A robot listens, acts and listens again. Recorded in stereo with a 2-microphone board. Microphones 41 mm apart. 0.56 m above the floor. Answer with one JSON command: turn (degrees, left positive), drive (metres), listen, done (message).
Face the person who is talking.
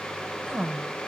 {"turn": -40}
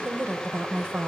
{"turn": -95}
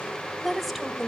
{"done": "Found it: a woman speaking, straight ahead."}